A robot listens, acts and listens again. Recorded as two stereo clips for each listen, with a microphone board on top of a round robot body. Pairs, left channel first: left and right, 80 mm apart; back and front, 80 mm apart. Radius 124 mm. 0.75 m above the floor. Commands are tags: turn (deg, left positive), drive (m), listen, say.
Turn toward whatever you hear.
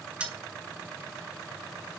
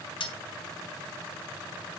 <turn deg="-165"/>
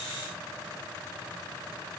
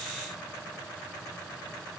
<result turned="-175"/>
<turn deg="10"/>
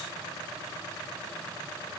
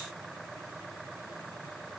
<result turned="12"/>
<say>Facing where the dropped coin came from. I can't hear it now.</say>